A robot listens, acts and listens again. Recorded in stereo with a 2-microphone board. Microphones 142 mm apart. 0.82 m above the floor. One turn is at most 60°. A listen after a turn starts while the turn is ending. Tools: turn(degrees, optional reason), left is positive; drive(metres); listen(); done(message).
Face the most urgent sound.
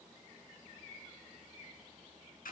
listen()
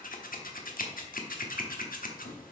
listen()
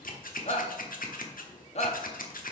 turn(degrees=50, reason="The shout: about 50° left or 130° left.")
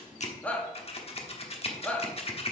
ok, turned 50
turn(degrees=10, reason="So it is at 10° left.")
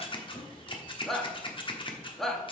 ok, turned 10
done("Found it: a shout, straight ahead, 1 to 2 m away.")